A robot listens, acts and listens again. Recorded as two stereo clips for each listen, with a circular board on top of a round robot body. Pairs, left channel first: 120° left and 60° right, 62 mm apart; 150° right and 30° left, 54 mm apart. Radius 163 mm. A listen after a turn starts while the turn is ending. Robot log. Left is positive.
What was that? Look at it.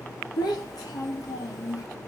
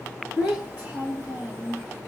note: The child speaking: 85° left.
cmd yaw +85
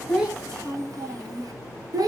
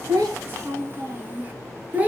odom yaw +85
note: The child speaking is now 35° right.
cmd yaw -35
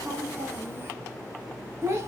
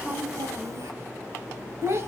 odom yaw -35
note: The child speaking is now 10° right.
cmd yaw -10
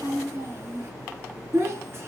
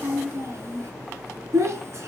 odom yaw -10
note: The child speaking is now 10° right.
cmd yaw -10
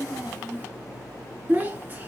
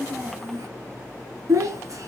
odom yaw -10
end: Found it: a child speaking, straight ahead, 1 to 2 m away.